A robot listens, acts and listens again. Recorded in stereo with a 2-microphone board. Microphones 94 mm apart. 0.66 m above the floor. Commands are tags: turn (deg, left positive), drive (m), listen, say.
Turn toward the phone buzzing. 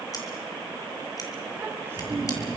<turn deg="50"/>
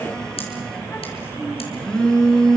<turn deg="10"/>
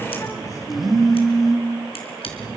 <say>Facing the phone buzzing.</say>